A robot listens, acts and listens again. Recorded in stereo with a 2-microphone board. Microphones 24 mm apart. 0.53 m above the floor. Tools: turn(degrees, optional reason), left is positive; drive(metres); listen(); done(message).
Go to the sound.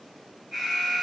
turn(degrees=30)
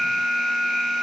turn(degrees=150, reason="So it is at 150° left.")
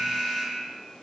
turn(degrees=-10, reason="The alarm is now 10° right.")
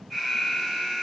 drive(metres=1.0)
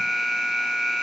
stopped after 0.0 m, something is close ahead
done("Blocked. The alarm is further on, straight ahead.")